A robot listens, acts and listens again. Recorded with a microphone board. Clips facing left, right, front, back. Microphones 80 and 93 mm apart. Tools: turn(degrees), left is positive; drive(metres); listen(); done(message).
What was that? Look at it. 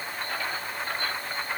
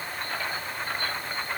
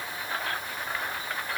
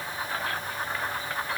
listen()
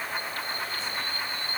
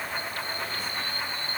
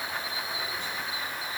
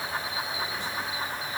listen()
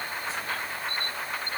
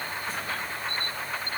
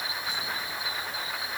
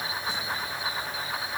done("I can't make out anything to turn to.")